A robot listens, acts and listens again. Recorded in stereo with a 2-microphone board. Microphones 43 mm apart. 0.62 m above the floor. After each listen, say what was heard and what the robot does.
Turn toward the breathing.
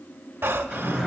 The breathing: about 55° right or 125° right. Turn 55° right.
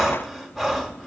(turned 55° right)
Facing the breathing, under 1 m away.